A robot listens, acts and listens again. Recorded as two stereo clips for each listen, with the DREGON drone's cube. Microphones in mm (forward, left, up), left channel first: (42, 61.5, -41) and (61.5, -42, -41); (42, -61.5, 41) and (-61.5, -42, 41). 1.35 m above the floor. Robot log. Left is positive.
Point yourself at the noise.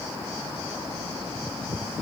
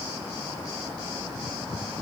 cmd idle
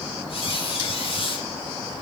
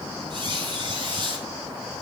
note: The squeak: 130° left.
cmd yaw +130
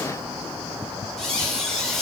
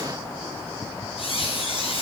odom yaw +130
note: The squeak is now 15° left.
cmd yaw +15
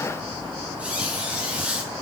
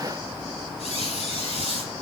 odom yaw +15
end: Facing the squeak.